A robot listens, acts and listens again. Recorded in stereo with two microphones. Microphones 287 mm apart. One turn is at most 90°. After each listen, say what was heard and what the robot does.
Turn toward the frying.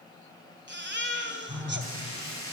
The frying: about 50° left or 130° left. Turn 50° left.
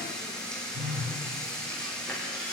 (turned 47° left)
Facing the frying.